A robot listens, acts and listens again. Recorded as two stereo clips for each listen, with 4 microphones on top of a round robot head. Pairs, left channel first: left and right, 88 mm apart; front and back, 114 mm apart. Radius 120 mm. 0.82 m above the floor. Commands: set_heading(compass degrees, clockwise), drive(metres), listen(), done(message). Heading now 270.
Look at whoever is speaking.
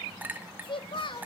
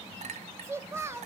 set_heading(160)
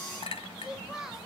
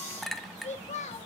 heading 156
done("Found it: a child speaking, straight ahead.")